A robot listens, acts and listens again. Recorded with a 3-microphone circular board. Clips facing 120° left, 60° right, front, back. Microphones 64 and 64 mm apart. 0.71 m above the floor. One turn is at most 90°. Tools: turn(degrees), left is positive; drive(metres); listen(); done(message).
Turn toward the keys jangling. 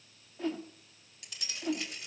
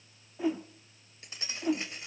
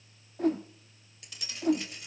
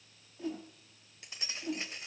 turn(degrees=-90)
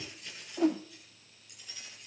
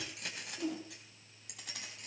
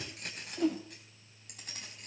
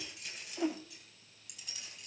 turn(degrees=-40)
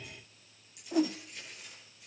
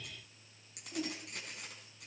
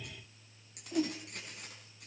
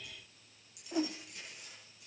turn(degrees=-30)
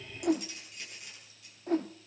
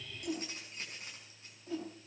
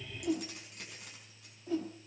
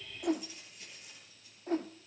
done("Facing the keys jangling, over 4 m away.")